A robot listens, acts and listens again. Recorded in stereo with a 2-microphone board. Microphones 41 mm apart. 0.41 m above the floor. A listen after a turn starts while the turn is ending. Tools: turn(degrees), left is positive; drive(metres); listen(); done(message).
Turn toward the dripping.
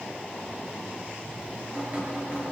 turn(degrees=-30)
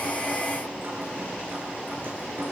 turn(degrees=-115)
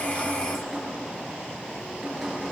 done("Found it: dripping, straight ahead.")